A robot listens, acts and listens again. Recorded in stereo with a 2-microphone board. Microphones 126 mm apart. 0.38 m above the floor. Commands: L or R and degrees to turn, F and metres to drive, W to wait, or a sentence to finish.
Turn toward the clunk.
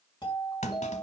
L70
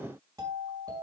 W
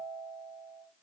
I heard a clunk, but can't make it out now. It was about straight ahead or 40° left.